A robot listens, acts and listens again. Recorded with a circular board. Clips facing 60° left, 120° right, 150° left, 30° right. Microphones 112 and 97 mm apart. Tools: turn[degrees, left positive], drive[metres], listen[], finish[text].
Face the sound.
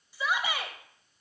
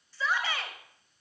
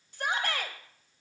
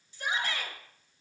Thought: The shout: 135° left.
Action: turn[135]
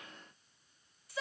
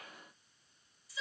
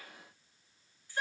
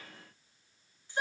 Thought: The shout is now 35° left.
Action: turn[35]
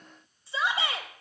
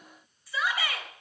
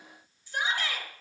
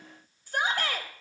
Action: finish[Facing the shout.]